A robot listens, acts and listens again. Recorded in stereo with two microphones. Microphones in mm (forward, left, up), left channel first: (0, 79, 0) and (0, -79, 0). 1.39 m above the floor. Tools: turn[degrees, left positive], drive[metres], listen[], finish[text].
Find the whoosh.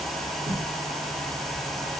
Thought: The whoosh: about 40° right or 140° right.
Action: turn[-40]
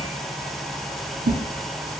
Thought: So it is at 95° right.
Action: turn[-95]
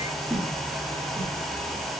Action: finish[Facing the whoosh, 1 to 2 m away.]